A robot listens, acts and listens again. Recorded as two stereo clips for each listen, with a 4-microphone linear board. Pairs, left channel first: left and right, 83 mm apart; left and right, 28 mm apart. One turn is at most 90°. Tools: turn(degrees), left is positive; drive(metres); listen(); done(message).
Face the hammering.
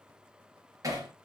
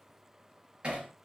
turn(degrees=-45)
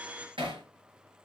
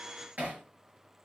turn(degrees=-90)
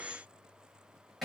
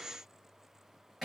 done("Found it: hammering, straight ahead.")